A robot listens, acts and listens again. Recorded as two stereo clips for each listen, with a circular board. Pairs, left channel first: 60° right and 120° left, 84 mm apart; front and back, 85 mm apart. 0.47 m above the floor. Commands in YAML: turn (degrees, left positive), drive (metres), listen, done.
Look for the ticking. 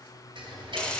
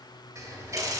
turn: 130
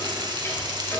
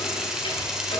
listen: true
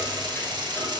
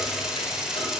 listen: true
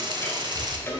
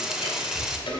done: "Found it: ticking, straight ahead."